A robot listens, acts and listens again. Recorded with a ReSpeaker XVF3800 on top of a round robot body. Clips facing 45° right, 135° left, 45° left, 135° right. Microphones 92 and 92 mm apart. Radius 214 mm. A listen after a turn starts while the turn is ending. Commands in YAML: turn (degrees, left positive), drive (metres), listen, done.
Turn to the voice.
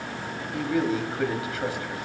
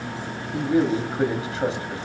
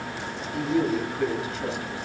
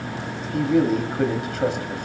turn: -165
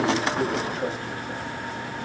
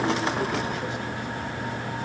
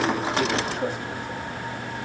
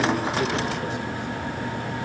listen: true
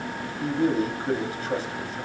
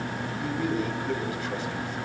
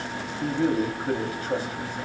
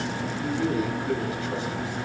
done: "Found it: a man speaking, straight ahead."